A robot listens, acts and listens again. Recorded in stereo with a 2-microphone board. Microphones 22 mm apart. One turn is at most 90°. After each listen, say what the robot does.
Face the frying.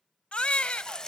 Turn 30° left.
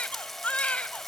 Keep listening.
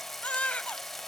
Facing the frying.